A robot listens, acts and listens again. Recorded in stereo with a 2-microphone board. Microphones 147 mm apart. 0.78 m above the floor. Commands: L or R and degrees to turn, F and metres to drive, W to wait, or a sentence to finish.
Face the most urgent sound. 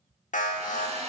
L60
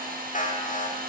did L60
L60
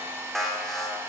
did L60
Found it: an alarm, straight ahead, 1 to 2 m away.